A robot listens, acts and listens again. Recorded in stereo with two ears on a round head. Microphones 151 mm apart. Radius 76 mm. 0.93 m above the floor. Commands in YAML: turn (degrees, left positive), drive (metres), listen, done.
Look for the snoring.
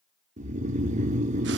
turn: -45
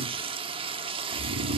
turn: -95
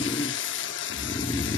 turn: 25
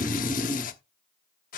turn: -10
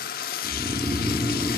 done: "Found it: snoring, straight ahead."